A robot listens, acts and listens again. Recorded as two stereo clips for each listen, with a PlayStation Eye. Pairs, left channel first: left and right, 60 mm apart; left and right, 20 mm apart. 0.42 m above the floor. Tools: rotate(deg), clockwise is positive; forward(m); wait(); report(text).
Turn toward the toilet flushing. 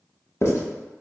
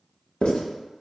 wait()
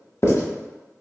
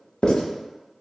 wait()
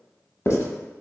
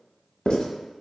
report("I can't make out a toilet flushing, only writing.")